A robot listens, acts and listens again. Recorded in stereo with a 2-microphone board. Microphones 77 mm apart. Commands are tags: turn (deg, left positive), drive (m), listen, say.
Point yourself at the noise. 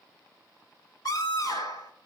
<turn deg="55"/>
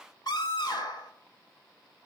<turn deg="65"/>
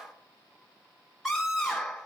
<say>Facing the scream, over 4 m away.</say>